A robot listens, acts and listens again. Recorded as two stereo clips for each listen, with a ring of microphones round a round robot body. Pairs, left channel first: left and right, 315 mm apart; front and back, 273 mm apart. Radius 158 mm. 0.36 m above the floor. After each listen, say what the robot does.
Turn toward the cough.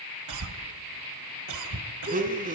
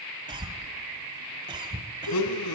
Turn 105° right.
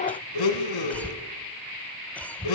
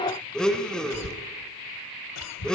Facing the cough.